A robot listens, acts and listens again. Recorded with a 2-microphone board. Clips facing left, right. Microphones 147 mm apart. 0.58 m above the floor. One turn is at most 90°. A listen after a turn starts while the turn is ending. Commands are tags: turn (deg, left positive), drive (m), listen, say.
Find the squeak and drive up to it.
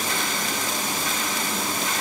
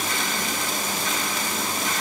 <listen/>
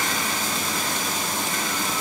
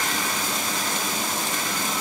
<listen/>
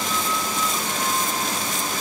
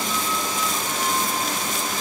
<say>I can't make out a squeak to turn to.</say>